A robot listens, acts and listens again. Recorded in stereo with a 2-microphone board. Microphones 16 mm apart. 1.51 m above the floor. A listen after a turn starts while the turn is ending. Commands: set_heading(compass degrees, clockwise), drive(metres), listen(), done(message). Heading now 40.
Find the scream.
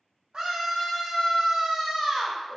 set_heading(130)
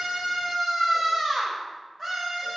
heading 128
set_heading(118)
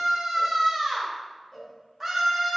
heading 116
done("Facing the scream, 1 to 2 m away.")